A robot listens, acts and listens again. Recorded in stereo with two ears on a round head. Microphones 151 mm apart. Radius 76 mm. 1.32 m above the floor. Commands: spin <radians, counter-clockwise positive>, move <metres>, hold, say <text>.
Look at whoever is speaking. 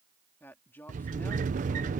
spin 0.52
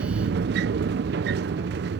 hold
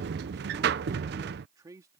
spin -0.35
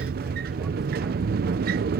hold
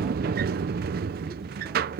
hold
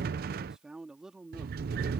say Facing the man speaking.